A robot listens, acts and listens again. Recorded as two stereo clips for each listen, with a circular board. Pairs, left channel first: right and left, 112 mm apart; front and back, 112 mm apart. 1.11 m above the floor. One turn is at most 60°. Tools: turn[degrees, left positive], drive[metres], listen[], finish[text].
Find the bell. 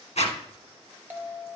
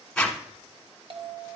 Thought: The bell: 160° left.
Action: turn[60]
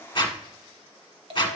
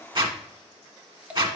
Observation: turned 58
Thought: The bell is now 100° left.
Action: turn[60]
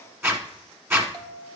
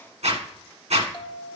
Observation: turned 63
Thought: The bell is now 40° left.
Action: turn[40]
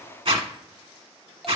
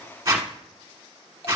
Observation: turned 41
Action: finish[Found it: a bell, straight ahead.]